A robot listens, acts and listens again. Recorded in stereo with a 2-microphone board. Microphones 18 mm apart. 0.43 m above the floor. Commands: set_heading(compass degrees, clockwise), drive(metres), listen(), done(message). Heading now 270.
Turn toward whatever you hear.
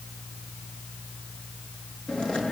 set_heading(220)
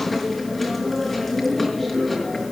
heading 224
done("Found it: chewing, straight ahead.")